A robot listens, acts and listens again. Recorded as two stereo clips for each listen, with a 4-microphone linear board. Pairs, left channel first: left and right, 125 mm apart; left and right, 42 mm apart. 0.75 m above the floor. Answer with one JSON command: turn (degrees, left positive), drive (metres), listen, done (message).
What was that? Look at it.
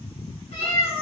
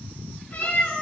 {"turn": 60}
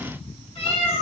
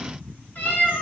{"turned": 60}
{"turn": 55}
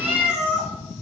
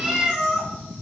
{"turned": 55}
{"done": "Facing the cat meowing."}